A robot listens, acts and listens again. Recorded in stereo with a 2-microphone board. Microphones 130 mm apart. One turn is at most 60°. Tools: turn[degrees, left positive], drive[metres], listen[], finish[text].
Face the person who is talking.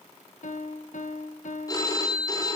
Action: listen[]
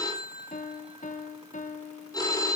Action: listen[]
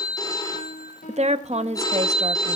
Thought: The woman speaking: about 60° right or 120° right.
Action: turn[-60]
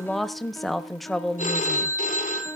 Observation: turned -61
Action: finish[Facing the woman speaking.]